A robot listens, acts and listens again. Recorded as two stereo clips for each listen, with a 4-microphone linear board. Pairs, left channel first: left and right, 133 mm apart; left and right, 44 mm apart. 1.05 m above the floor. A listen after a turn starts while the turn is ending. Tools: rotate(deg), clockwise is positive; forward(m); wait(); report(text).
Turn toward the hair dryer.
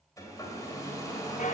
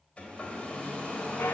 rotate(-25)
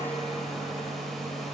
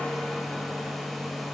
report("Facing the hair dryer, 1 to 2 m away.")